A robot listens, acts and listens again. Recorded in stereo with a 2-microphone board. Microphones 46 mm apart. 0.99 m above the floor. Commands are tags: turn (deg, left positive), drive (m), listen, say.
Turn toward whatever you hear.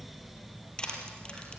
<turn deg="20"/>
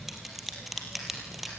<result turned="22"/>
<say>Facing the crushing.</say>